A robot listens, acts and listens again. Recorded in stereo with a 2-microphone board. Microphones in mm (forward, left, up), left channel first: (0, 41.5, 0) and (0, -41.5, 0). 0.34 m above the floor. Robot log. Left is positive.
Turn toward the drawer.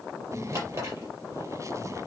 note: The drawer: about 40° right or 140° right.
cmd yaw -40
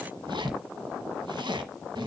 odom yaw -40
cmd idle
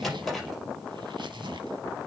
end: Facing the drawer.